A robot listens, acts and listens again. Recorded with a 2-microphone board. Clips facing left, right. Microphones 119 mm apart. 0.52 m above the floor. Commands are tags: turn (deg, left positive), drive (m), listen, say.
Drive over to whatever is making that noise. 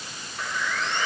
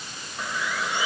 <turn deg="-30"/>
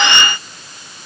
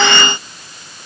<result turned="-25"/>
<listen/>
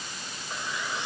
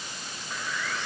<turn deg="20"/>
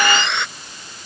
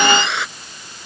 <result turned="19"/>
<drive m="1.0"/>
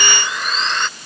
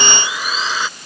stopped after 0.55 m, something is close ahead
<say>Blocked. The sawing is further on, straight ahead.</say>